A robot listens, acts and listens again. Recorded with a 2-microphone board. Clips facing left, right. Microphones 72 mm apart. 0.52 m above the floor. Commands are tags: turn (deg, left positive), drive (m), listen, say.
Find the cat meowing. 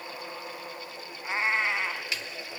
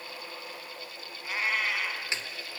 <turn deg="30"/>
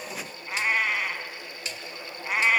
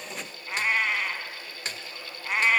<say>Facing the cat meowing.</say>